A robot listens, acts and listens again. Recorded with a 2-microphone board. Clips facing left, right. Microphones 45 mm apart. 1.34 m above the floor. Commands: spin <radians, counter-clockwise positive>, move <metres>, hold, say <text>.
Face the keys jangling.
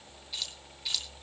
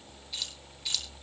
spin 0.52
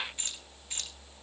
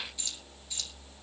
spin 2.27
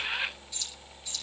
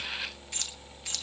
spin -1.22
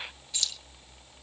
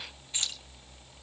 spin -0.61
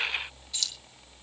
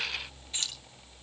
spin -0.61
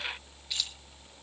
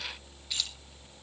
say Facing the keys jangling.